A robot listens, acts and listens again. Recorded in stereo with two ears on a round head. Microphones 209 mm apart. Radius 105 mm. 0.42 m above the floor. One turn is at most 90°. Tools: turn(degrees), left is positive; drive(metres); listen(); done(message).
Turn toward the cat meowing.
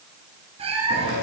turn(degrees=-25)
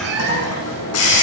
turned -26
turn(degrees=-90)
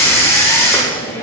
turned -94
turn(degrees=-35)
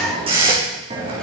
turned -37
listen()
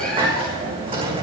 done("I heard a cat meowing from this way, but can't make it out now.")